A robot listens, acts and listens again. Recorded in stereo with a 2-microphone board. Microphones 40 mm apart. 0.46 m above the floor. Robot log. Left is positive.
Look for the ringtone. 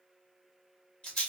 cmd idle
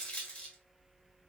cmd idle
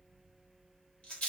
end: I can't make out a ringtone, only a rattle.